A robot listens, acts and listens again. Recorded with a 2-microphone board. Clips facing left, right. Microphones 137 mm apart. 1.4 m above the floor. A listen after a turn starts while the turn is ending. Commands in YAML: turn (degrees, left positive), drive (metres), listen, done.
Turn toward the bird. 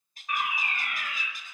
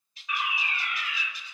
turn: 50
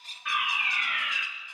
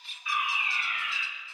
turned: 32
listen: true
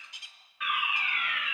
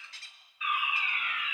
turn: 15
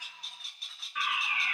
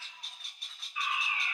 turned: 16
done: "Facing the bird."